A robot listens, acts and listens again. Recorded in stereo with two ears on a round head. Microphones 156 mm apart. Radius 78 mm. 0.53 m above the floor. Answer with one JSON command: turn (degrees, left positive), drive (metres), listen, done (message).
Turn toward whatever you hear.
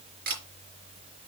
{"turn": -55}
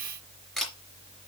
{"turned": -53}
{"done": "Facing the camera shutter."}